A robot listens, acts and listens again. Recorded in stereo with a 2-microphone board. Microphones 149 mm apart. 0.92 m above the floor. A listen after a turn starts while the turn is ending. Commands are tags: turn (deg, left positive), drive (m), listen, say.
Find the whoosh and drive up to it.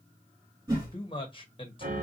<turn deg="-30"/>
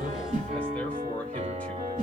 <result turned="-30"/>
<turn deg="-120"/>
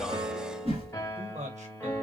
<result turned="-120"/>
<turn deg="-45"/>
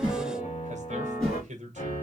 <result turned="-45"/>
<drive m="1.0"/>
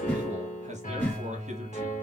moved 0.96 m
<turn deg="15"/>
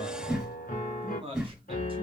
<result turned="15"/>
<drive m="1.0"/>
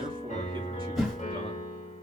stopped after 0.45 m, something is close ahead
<say>I am next to the whoosh.</say>